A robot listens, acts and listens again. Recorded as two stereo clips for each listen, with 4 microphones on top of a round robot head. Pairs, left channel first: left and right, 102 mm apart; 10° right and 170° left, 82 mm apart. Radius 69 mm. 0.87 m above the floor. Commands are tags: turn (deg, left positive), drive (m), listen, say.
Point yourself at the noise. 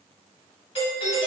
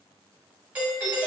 <turn deg="100"/>
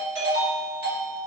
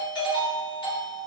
<turn deg="-20"/>
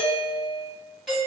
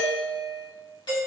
<say>Facing the doorbell, 1 to 2 m away.</say>